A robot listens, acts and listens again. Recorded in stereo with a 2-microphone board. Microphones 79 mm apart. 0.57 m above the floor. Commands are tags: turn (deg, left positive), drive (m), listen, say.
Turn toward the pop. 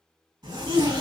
<listen/>
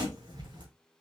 <listen/>
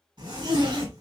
<say>I can't make out a pop to turn to.</say>